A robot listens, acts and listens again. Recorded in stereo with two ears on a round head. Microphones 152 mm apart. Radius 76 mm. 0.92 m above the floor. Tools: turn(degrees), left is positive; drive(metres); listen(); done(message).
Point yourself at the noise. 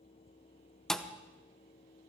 turn(degrees=30)
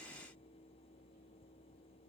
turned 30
listen()
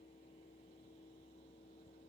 done("I heard a thud, but can't make it out now. It was about 25° right or 145° left.")